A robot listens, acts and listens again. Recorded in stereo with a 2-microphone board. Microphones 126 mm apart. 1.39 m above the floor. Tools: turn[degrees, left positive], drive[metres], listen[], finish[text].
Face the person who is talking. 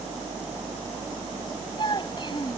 Thought: The child speaking: about 40° left or 140° left.
Action: turn[40]
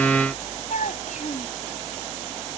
Thought: So it is at 100° left.
Action: turn[100]
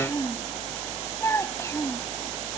Thought: The child speaking is now 20° left.
Action: turn[20]
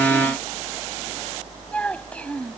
Thought: The child speaking is now 10° left.
Action: turn[10]
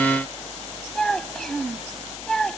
Action: finish[Found it: a child speaking, straight ahead.]